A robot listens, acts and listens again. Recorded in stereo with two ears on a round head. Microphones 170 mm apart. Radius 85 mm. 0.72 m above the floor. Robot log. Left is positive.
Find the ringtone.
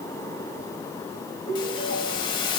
note: The ringtone: about 50° right or 130° right.
cmd yaw -50
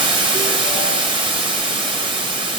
cmd idle
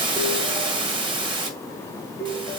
end: Found it: a ringtone, straight ahead, 2 to 4 m away.